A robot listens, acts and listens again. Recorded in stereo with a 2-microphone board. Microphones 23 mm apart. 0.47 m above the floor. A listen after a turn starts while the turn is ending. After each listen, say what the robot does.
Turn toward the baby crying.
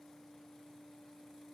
Keep listening.
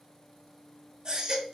Turn 25° right.
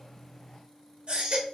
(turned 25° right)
Turn 120° right.
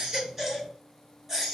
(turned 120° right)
Turn 20° right.
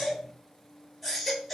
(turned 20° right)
Facing the baby crying, 1 to 2 m away.